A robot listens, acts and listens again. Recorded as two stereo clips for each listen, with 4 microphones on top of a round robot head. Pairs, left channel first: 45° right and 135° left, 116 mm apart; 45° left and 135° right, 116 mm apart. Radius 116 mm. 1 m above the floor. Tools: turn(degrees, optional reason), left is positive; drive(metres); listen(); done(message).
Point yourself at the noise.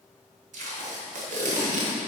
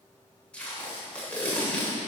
turn(degrees=125, reason="The tape being pulled: 125° left.")
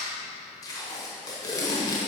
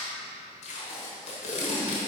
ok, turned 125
turn(degrees=20, reason="The tape being pulled is now 20° left.")
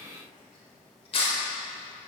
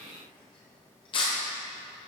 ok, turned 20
done("Facing the tape being pulled.")